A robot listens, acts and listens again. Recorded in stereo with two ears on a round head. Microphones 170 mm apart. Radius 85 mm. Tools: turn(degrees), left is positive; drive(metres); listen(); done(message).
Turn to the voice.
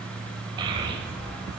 turn(degrees=-25)
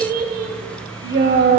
turn(degrees=-130)
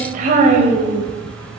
turn(degrees=-40)
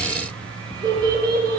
turn(degrees=-20)
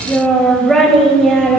done("Found it: a child speaking, straight ahead.")